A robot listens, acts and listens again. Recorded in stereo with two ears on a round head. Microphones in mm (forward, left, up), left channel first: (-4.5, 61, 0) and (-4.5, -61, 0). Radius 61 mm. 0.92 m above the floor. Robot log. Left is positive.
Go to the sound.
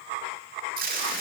note: The tape being pulled: about 70° right or 110° right.
cmd yaw -70
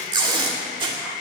note: So it is at 35° right.
cmd yaw -35
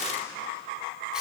cmd idle
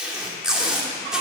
cmd fwd 1.0
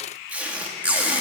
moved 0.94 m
note: The tape being pulled is now 10° right.
cmd yaw -10
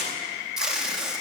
cmd fwd 1.0
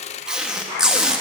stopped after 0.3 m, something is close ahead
end: Arrived at the tape being pulled, straight ahead.